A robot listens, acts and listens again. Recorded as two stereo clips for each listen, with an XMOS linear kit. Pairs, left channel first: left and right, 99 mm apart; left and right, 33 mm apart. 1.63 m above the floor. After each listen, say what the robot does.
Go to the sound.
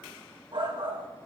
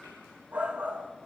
Turn 55° right.
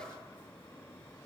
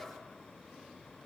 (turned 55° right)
Keep listening.
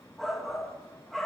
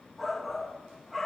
Drive 1.0 m forward.
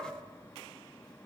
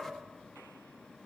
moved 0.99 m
Drive 1.0 m forward.
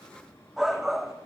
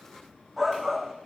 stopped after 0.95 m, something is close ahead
I am next to the shout.